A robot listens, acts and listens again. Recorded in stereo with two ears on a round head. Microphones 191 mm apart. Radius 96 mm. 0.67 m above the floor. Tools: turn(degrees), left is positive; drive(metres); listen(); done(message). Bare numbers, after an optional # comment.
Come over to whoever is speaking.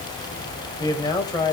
# The man speaking: about 20° left or 160° left.
turn(20)
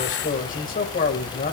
# So it is at 140° left.
turn(140)
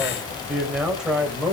drive(1.0)
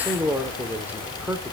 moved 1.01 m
# The man speaking is now 10° right.
turn(-10)
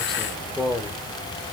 drive(1.0)
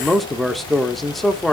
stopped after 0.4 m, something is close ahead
done("Arrived at the man speaking, straight ahead.")